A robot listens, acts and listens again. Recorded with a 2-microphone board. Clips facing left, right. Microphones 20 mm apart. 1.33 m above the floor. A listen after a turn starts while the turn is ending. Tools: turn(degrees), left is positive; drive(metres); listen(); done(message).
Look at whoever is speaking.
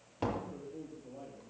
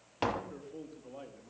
turn(degrees=-90)
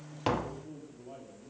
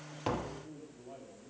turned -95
done("Found it: a man speaking, straight ahead, 2 to 4 m away.")